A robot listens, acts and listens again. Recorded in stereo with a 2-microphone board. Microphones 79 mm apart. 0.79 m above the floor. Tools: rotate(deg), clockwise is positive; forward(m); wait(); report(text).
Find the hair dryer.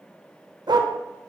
wait()
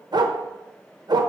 wait()
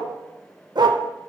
report("I can't make out a hair dryer to turn to.")